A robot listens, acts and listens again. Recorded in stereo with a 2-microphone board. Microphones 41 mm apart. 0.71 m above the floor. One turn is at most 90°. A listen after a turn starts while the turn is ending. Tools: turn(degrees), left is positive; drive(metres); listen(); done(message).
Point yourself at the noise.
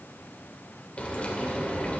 turn(degrees=35)
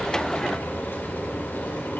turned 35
turn(degrees=90)
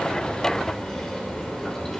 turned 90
turn(degrees=15)
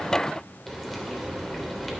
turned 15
done("Found it: frying, straight ahead.")